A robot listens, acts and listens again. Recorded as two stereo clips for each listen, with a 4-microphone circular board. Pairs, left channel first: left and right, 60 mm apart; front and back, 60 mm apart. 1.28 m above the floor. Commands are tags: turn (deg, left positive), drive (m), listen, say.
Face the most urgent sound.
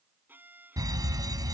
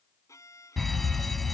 <turn deg="-90"/>
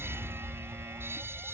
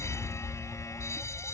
<turn deg="-40"/>
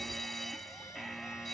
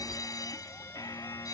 <say>Found it: a fire alarm, straight ahead.</say>